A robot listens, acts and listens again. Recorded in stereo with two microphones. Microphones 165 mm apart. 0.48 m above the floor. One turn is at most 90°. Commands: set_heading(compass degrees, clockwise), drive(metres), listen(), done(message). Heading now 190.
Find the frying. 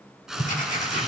set_heading(220)
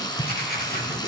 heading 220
set_heading(195)
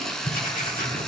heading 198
done("Facing the frying.")